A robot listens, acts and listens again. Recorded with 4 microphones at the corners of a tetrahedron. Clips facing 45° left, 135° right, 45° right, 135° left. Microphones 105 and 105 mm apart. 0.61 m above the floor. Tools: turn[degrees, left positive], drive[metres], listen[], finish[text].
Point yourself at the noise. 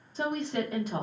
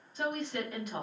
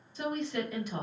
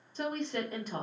Thought: The woman speaking: 95° left.
Action: turn[95]
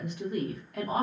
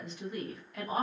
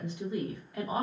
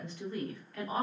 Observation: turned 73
Thought: The woman speaking is now 25° left.
Action: turn[25]
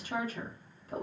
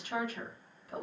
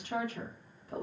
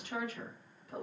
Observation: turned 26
Action: finish[Found it: a woman speaking, straight ahead, under 1 m away.]